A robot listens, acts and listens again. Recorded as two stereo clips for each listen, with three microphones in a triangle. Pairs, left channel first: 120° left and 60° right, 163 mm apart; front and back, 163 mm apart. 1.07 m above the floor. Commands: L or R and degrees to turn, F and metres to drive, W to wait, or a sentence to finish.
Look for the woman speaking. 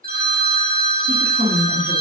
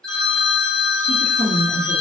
L20
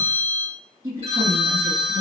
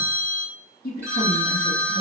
Facing the woman speaking.